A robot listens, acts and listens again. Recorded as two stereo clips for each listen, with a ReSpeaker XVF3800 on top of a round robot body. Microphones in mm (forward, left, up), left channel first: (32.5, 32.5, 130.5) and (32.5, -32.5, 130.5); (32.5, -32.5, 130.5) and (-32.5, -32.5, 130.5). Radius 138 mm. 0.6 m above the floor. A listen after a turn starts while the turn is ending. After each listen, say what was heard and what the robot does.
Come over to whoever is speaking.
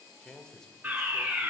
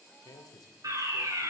The man speaking: 10° left. Turn 10° left.
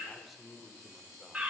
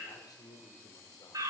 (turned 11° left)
Drive 1.0 m forward.
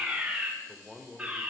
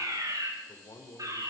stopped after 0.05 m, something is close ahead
Something is in my way. I am facing the man speaking but have not reached it.